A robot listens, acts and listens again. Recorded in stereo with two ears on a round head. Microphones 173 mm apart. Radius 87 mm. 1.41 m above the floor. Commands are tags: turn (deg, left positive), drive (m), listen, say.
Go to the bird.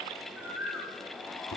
<turn deg="-30"/>
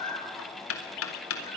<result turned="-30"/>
<turn deg="25"/>
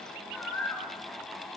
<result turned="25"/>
<turn deg="10"/>
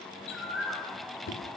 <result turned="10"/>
<drive m="1.0"/>
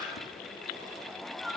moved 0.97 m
<drive m="1.0"/>
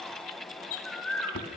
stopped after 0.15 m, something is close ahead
<say>Blocked. The bird is further on, straight ahead.</say>